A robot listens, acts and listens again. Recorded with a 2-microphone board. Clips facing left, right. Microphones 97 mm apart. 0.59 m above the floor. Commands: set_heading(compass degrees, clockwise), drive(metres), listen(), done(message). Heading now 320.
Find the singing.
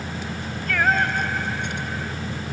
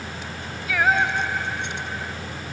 set_heading(350)
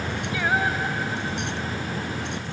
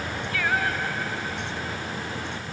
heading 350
set_heading(330)
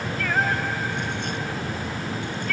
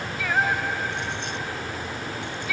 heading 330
done("Found it: singing, straight ahead.")